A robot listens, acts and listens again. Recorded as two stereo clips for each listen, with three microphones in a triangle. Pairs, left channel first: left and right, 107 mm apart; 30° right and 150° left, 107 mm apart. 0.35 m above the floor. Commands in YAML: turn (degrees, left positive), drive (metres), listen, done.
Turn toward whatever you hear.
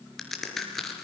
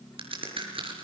turn: 175
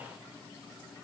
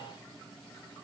done: "Facing where the crack came from. I can't hear it now."